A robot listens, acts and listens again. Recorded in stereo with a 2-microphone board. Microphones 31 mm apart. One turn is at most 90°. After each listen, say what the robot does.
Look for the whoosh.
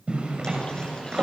Keep listening.
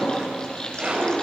Keep listening.
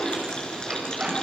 I can't make out a whoosh, only frying and a zipper.